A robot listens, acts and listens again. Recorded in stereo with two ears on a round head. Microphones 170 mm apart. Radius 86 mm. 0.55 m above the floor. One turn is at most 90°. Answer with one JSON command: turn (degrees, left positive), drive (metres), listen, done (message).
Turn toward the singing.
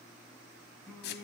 {"turn": 30}
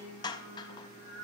{"turn": -30}
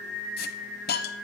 {"done": "Found it: singing, straight ahead, 2 to 4 m away."}